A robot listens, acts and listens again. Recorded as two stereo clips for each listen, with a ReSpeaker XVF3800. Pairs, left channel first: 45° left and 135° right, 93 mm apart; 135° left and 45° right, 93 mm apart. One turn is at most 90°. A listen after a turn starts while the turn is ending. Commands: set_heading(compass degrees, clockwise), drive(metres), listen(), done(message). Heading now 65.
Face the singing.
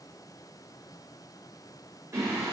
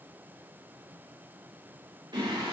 set_heading(150)
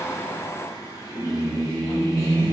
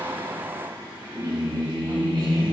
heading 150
set_heading(160)
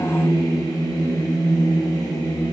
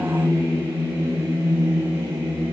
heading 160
done("Found it: singing, straight ahead, over 4 m away.")